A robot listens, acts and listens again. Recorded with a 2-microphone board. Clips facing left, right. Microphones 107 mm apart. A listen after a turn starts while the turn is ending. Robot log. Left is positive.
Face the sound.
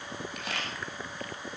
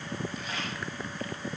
note: The camera shutter: about 70° left or 110° left.
cmd yaw +70
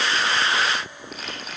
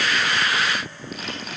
end: Found it: a camera shutter, straight ahead, over 4 m away.